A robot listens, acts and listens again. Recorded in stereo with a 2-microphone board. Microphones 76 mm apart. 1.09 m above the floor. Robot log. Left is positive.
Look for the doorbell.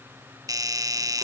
note: The doorbell: about 55° right or 125° right.
cmd yaw -55
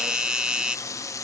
note: So it is at 15° right.
cmd yaw -15
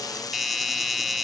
end: Found it: a doorbell, straight ahead.